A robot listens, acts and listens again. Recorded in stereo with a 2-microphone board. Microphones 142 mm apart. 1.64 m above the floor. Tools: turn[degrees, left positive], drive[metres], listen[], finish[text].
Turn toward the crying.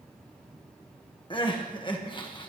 Thought: The crying: about 35° left or 145° left.
Action: turn[35]
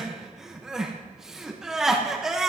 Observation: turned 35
Action: finish[Facing the crying.]